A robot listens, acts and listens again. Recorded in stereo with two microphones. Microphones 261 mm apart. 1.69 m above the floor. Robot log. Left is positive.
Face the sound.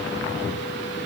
cmd idle
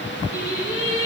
note: The singing: about 55° right or 125° right.
cmd yaw -55
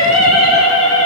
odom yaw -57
note: So it is at 75° right.
cmd yaw -75
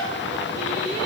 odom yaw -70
cmd idle
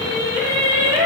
note: The singing is now 15° right.
cmd yaw -15
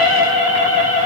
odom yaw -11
note: The singing is now 10° right.
cmd yaw -10
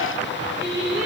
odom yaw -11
end: Found it: singing, straight ahead.